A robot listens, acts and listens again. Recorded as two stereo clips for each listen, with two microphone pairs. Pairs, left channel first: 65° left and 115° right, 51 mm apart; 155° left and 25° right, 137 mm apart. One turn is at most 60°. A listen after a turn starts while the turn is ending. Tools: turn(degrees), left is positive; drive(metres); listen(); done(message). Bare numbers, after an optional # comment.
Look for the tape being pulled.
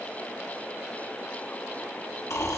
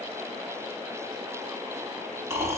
listen()
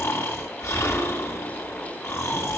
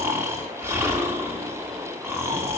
listen()
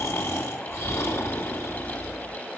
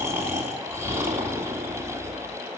done("I can't make out tape being pulled to turn to.")